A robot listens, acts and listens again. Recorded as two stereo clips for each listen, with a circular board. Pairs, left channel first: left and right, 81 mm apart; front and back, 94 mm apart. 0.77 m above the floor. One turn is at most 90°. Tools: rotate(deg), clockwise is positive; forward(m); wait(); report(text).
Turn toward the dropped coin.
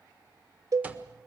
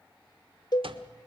wait()
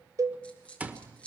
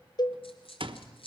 rotate(-15)
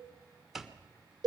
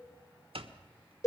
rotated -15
report("I heard a dropped coin from this way, but can't make it out now.")